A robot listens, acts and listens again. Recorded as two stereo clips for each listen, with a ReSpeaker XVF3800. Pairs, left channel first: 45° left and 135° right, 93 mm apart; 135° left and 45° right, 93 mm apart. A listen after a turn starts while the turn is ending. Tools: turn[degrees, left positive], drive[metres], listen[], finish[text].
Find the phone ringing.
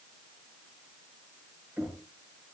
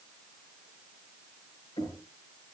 Action: listen[]
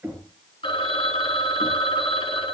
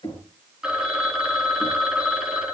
Thought: The phone ringing: 40° left.
Action: turn[40]
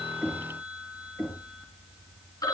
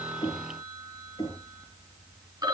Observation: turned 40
Action: finish[Facing the phone ringing, 1 to 2 m away.]